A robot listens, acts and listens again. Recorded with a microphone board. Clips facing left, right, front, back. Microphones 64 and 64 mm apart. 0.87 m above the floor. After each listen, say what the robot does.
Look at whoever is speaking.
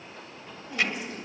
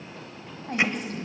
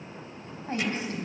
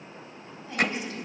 Turn 50° right.
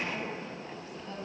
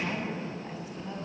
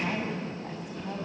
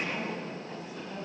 Turn 15° right.
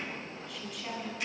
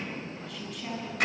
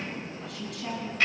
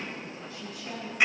Found it: a woman speaking, straight ahead.